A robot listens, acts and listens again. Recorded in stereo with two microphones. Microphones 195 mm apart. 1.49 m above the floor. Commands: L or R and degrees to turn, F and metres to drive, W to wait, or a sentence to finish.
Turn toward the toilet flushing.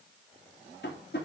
W
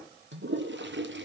R70
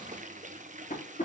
R40
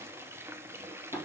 R10
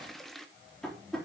Found it: a toilet flushing, straight ahead.